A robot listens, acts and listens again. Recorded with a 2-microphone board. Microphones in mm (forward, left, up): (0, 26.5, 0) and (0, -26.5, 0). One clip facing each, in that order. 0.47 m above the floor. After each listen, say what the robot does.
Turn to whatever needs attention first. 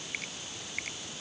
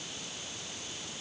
Keep listening.
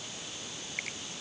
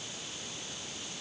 Keep listening.
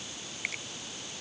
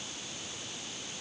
I can't make out anything urgent, only a finger snap.